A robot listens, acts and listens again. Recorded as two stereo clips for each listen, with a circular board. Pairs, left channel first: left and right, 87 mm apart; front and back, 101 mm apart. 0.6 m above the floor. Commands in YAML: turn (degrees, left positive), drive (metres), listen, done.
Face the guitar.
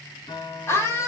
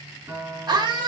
turn: 110
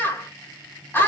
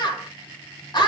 listen: true
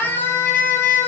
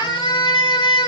listen: true
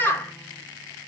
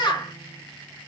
done: "I heard a guitar from this way, but can't make it out now."